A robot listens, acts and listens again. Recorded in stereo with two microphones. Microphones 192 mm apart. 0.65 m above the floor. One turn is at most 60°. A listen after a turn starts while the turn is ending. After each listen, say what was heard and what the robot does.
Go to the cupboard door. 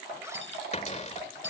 The cupboard door: about 35° left or 145° left. Turn 35° left.
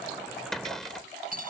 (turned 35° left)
Drive 1.0 m forward.
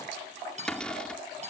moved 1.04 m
Drive 1.0 m forward.
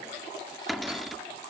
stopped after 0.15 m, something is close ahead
I am next to the cupboard door.